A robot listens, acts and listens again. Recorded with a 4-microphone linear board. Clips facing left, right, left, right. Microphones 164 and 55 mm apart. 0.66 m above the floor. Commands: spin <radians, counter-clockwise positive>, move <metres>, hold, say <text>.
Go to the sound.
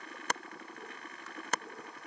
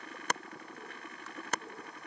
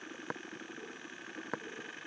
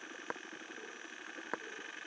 hold
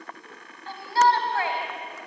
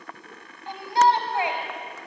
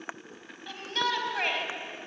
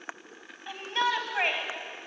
spin -0.26
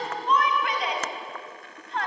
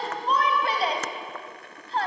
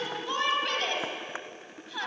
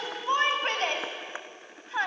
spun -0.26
spin -2.53
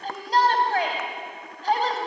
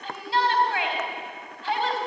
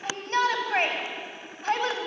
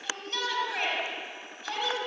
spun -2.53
spin 0.70
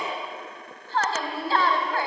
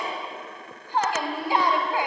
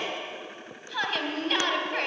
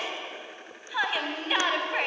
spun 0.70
spin -0.26
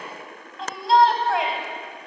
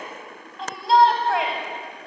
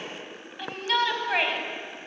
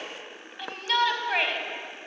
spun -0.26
move 1.0
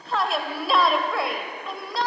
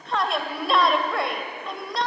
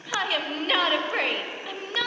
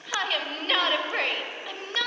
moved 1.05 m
move 1.0
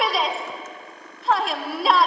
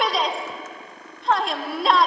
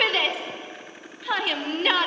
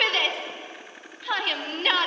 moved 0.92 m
move 1.0
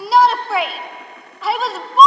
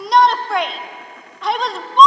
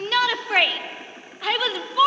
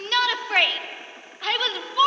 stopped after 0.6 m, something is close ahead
say I am next to the shout.